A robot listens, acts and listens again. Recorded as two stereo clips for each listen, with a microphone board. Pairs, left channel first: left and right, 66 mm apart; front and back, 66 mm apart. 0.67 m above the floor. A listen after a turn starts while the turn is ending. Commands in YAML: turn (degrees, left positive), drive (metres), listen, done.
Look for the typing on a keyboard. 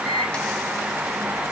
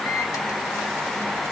listen: true
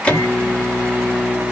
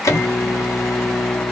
listen: true
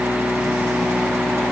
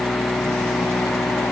done: "I can't make out typing on a keyboard to turn to."